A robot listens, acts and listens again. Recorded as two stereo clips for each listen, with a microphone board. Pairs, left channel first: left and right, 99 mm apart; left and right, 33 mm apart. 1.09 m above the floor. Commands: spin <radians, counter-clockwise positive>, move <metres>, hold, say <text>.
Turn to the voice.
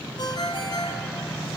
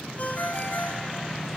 hold
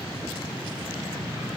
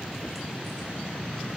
hold
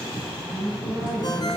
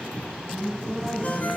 spin -0.61
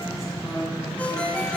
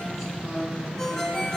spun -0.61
say Found it: a woman speaking, straight ahead, over 4 m away.